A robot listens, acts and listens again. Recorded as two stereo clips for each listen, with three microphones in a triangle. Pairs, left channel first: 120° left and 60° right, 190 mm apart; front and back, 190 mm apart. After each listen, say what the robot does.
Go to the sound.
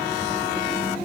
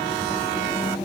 Keep listening.
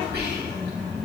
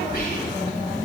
Turn 35° right.
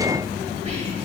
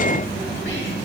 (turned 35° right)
Turn 10° right.
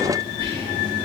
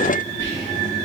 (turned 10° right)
Drive 1.0 m forward.
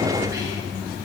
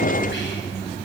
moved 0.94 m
Drive 1.0 m forward.
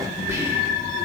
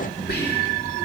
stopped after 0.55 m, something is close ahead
Turn 10° left.
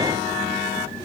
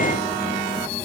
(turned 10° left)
Keep listening.
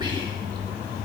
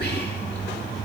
Arrived at the whispering, straight ahead.